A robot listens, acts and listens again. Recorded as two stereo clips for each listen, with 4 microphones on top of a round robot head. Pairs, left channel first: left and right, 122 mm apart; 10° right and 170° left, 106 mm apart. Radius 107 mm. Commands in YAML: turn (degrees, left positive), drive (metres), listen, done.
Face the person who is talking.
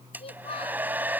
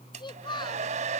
turn: 35
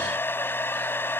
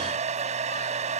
listen: true
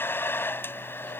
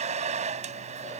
listen: true
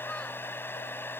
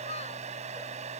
done: "I heard a child speaking from this way, but can't make it out now."